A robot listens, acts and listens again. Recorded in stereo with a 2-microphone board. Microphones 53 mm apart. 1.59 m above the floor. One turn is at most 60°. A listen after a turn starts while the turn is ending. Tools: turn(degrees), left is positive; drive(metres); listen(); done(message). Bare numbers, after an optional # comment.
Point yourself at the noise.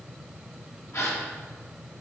# The gasp: about 65° left or 115° left.
turn(60)
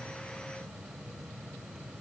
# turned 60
listen()
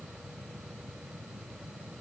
done("I heard a gasp, but can't make it out now. It was about 5° left or 55° left.")